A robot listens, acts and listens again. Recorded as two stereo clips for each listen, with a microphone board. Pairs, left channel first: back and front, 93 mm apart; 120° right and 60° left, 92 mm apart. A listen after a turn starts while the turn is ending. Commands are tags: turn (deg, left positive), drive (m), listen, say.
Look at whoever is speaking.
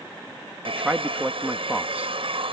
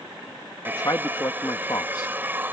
<turn deg="-75"/>
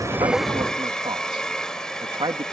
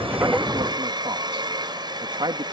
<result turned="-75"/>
<turn deg="35"/>
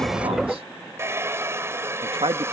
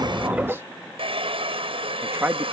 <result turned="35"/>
<say>Facing the man speaking.</say>